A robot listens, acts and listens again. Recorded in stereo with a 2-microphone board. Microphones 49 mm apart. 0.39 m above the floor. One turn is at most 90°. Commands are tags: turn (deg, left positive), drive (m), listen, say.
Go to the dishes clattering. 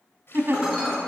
<turn deg="-30"/>
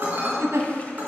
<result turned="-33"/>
<turn deg="-90"/>
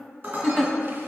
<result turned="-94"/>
<turn deg="-45"/>
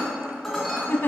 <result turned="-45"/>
<drive m="1.0"/>
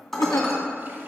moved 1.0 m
<drive m="1.0"/>
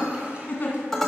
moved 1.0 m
<drive m="1.0"/>
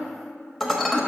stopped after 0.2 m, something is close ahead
<say>I am next to the dishes clattering.</say>